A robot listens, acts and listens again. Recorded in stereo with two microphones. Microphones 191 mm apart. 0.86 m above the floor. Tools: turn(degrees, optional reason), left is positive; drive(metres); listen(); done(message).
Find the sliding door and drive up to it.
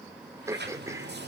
turn(degrees=-60, reason="The sliding door: about 60° right or 120° right.")
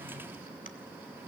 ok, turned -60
turn(degrees=-10, reason="So it is at 10° right.")
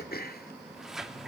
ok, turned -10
drive(metres=1.0)
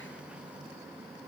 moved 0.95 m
listen()
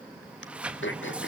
turn(degrees=-10, reason="The sliding door is now 10° right.")
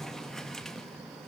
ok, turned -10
drive(metres=1.0)
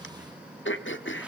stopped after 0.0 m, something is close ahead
listen()
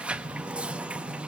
turn(degrees=-10, reason="The sliding door is now 10° right.")
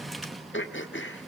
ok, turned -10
done("I am next to the sliding door.")